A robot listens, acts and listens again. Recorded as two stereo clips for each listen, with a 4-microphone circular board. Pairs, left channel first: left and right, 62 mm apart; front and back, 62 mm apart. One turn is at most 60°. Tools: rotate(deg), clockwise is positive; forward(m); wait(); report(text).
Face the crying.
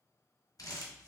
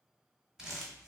wait()
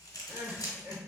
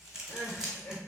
rotate(40)
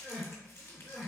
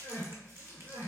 report("Facing the crying.")